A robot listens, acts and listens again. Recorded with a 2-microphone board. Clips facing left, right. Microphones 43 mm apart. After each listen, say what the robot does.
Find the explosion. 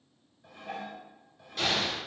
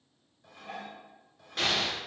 Turn 40° right.
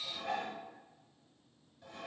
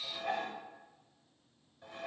Keep listening.
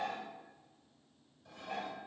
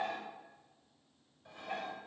I heard an explosion, but can't make it out now. It was about straight ahead or 100° right.